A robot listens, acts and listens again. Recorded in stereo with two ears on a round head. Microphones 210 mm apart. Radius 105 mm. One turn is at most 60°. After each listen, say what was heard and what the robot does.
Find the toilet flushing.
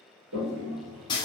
Turn 60° right.
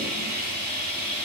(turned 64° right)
Nothing new. It was at 25° right. Turn 25° right.
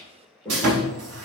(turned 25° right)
The toilet flushing is now 10° left. Turn 10° left.
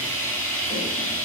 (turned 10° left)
Keep listening.
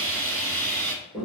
Found it: a toilet flushing, straight ahead.